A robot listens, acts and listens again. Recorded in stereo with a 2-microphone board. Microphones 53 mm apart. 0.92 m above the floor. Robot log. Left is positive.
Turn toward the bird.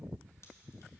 cmd idle
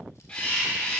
note: The bird: about 20° left or 160° left.
cmd yaw +20
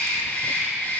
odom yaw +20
note: So it is at 135° left.
cmd yaw +135
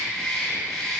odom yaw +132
end: Found it: a bird, straight ahead, 2 to 4 m away.